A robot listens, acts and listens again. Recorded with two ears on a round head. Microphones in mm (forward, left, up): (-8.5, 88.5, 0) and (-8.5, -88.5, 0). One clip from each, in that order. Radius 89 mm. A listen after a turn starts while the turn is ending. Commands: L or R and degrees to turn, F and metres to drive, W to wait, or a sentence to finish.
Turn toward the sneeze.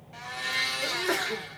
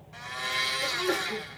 L20
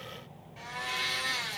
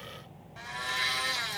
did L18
W
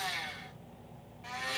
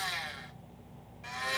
I heard a sneeze, but can't make it out now. It was about 5° left or 140° left.